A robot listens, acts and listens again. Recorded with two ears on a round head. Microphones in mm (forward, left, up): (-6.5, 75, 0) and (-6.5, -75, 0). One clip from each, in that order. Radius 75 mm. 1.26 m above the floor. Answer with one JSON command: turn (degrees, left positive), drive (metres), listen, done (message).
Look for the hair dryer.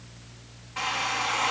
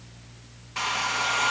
{"turn": -70}
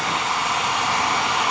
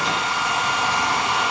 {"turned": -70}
{"done": "Found it: a hair dryer, straight ahead, 1 to 2 m away."}